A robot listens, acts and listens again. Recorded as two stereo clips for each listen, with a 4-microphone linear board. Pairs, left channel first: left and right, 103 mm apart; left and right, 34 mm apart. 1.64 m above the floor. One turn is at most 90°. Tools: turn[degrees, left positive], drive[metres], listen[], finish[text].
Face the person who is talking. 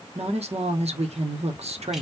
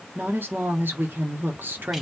Action: turn[-90]
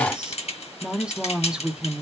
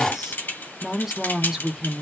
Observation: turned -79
Thought: So it is at 10° right.
Action: turn[-10]
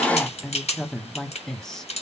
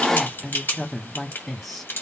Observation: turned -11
Action: finish[Facing the woman speaking, 1 to 2 m away.]